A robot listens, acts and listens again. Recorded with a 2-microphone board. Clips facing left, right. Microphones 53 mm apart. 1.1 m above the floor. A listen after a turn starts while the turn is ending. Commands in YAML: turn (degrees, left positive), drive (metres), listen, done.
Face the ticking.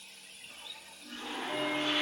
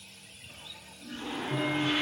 turn: 30
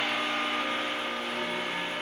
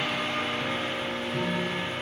turn: 115
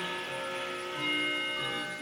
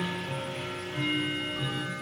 done: "Found it: ticking, straight ahead."